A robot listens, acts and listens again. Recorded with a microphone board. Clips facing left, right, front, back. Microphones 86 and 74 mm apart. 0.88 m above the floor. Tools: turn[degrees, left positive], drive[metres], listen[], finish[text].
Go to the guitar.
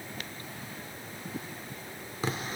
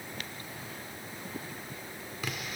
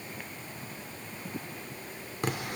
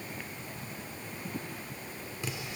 Action: listen[]
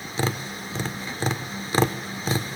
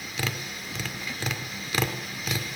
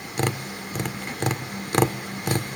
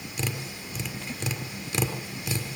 Action: listen[]
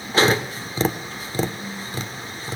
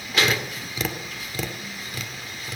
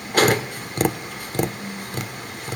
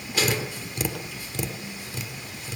Action: finish[I can't make out a guitar to turn to.]